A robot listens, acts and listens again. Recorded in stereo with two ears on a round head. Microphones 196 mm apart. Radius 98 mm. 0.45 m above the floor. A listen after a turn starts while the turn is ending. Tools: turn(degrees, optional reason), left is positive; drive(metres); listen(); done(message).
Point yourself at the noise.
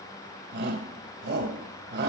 turn(degrees=-55, reason="The shout: about 55° right or 125° right.")
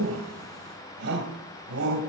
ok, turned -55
turn(degrees=-65, reason="So it is at 65° right.")
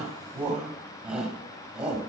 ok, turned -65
done("Facing the shout, 2 to 4 m away.")